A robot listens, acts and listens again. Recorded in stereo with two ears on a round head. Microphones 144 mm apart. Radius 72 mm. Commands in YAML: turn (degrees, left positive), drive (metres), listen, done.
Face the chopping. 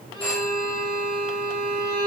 listen: true
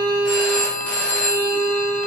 listen: true
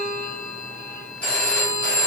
done: "I can't make out chopping to turn to."